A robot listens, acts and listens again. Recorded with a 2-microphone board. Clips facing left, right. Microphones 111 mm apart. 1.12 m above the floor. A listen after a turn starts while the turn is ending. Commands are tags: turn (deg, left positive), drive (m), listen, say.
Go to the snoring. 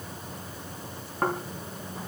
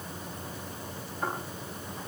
<turn deg="90"/>
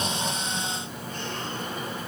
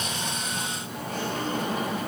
<listen/>
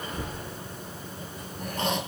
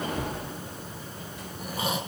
<turn deg="-10"/>
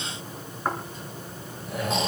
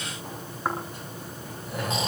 <drive m="1.0"/>
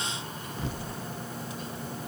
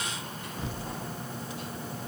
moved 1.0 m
<drive m="1.0"/>
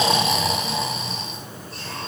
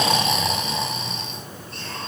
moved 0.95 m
<drive m="1.0"/>
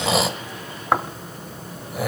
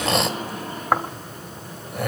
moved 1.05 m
<drive m="1.0"/>
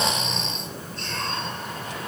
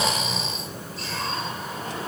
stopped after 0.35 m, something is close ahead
<say>I am next to the snoring.</say>